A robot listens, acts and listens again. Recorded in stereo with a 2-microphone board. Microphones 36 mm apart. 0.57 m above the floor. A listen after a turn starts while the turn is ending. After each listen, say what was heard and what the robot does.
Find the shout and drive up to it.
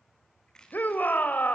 The shout: about 50° left or 130° left. Turn 50° left.
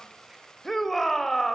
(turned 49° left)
Drive 1.0 m forward.
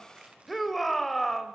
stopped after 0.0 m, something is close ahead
Something is in my way. I am facing the shout but have not reached it.